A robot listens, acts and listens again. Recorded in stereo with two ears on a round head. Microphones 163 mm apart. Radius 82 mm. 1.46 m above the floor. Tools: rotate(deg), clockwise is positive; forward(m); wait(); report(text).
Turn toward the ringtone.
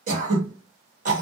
wait()
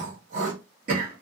wait()
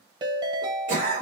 rotate(25)
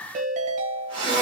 rotate(130)
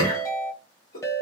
rotate(-20)
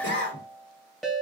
report("Facing the ringtone, under 1 m away.")